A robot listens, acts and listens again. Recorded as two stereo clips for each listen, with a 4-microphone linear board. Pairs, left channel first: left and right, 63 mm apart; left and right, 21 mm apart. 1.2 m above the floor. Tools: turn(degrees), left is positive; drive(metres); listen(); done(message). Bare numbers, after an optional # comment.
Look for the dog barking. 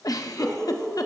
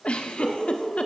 turn(30)
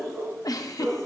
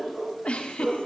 # So it is at 25° right.
turn(-25)
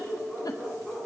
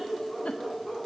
done("Facing the dog barking.")